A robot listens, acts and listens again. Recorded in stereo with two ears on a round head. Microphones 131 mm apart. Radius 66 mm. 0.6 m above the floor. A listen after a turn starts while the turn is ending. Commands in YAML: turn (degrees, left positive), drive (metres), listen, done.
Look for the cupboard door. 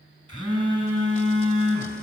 listen: true
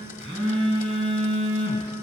listen: true
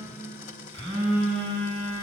done: "I can't make out a cupboard door, only a blender and a phone buzzing."